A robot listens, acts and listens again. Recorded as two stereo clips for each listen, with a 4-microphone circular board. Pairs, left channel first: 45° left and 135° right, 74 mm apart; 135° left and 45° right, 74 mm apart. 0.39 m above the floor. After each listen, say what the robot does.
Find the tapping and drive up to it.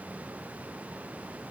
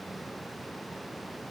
Keep listening.
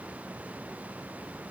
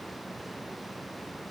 Keep listening.
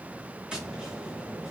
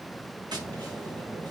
Turn 60° right.
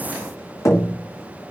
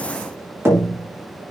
Drive 1.0 m forward.
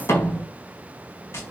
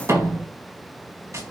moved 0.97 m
Drive 1.0 m forward.
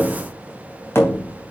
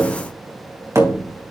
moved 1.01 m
Drive 1.0 m forward.
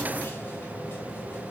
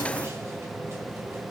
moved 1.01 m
Keep listening.
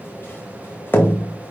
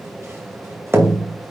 Drive 1.0 m forward.
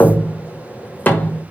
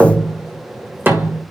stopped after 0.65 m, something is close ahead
Arrived at the tapping, straight ahead.